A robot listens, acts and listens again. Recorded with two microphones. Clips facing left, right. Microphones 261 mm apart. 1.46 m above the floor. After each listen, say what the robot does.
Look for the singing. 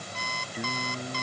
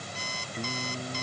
Turn 30° left.
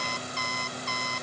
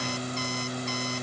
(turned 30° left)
Turn 30° right.
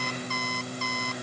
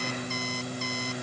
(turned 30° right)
Facing the singing.